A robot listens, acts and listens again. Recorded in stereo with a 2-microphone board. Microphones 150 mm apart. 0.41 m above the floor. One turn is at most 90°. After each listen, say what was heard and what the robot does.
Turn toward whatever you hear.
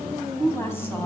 The woman speaking: about 15° left or 165° left. Turn 15° left.
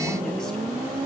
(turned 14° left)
Keep listening.
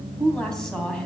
Facing the woman speaking.